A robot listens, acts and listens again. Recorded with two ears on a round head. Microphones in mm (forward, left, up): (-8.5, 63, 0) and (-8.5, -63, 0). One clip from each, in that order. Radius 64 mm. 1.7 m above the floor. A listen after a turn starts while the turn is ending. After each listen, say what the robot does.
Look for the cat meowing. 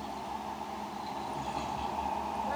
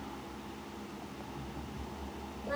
Keep listening.
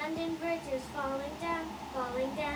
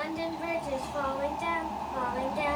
Keep listening.
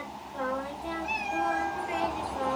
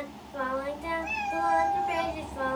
Turn 30° right.
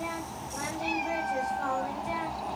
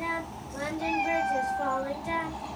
Turn 25° left.
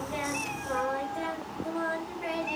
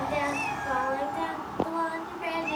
Turn 15° right.
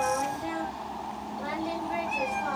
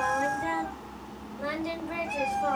Found it: a cat meowing, straight ahead, 2 to 4 m away.